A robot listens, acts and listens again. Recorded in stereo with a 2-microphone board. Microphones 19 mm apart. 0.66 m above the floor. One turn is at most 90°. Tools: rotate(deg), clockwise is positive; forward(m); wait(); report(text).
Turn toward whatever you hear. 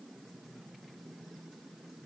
wait()
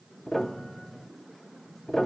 rotate(-35)
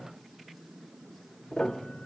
rotate(-90)
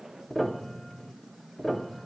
rotate(-10)
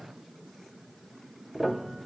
report("Found it: a piano, straight ahead.")